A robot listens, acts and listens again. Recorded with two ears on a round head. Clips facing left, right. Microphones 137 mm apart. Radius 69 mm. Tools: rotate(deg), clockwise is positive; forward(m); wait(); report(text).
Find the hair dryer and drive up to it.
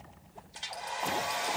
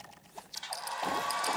rotate(-25)
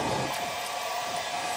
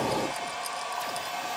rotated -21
forward(1.0)
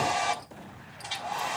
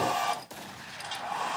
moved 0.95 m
rotate(-10)
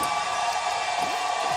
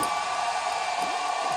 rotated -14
forward(1.0)
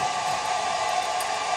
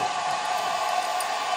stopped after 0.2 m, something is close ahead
report("Arrived at the hair dryer, straight ahead.")